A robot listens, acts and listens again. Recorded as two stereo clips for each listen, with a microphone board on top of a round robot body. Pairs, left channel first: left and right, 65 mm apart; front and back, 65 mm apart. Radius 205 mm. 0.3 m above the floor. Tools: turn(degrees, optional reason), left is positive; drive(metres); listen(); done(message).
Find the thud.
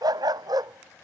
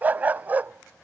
listen()
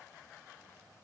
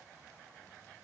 listen()
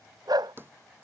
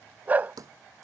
turn(degrees=-150, reason="The thud: 150° right.")
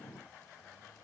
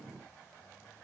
done("I heard a thud from this way, but can't make it out now.")